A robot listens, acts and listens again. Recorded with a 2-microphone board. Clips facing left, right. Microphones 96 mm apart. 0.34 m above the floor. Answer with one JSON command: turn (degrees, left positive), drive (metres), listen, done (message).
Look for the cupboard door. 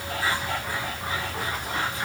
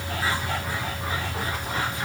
{"listen": true}
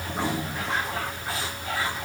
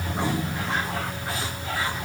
{"listen": true}
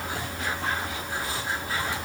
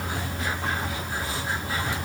{"done": "I can't make out a cupboard door to turn to."}